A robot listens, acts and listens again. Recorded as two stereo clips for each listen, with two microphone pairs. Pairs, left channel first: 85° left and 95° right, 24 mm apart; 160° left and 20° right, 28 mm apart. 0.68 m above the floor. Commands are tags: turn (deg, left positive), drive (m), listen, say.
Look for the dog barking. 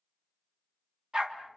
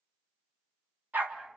<turn deg="-35"/>
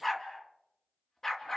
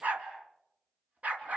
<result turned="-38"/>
<turn deg="20"/>
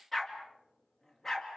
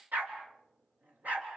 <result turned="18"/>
<turn deg="10"/>
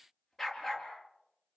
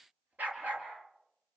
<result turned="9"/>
<say>Found it: a dog barking, straight ahead, over 4 m away.</say>